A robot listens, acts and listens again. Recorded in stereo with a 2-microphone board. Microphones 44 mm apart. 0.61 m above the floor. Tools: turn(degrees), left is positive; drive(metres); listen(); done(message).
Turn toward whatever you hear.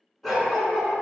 turn(degrees=-30)
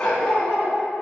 turn(degrees=10)
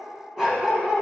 turn(degrees=-20)
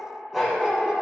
turn(degrees=-15)
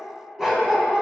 turn(degrees=-20)
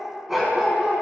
turn(degrees=-15)
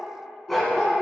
done("Found it: a dog barking, straight ahead, 1 to 2 m away.")